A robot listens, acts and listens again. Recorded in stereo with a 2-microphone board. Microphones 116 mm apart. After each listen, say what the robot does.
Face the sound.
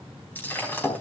Turn 20° left.
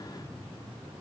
Keep listening.
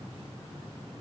I heard breaking glass, but can't make it out now. It was about straight ahead or 140° left.